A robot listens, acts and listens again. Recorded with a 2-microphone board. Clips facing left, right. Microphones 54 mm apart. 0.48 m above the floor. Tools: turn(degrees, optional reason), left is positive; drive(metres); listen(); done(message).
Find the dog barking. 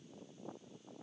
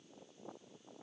listen()
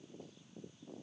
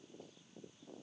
listen()
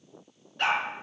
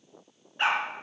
turn(degrees=-25, reason="The dog barking: about 25° right or 155° right.")
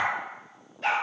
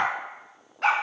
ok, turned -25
turn(degrees=-105, reason="So it is at 105° right.")
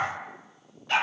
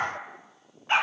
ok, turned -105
turn(degrees=-25, reason="The dog barking is now 25° right.")
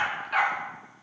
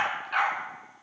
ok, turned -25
done("Facing the dog barking.")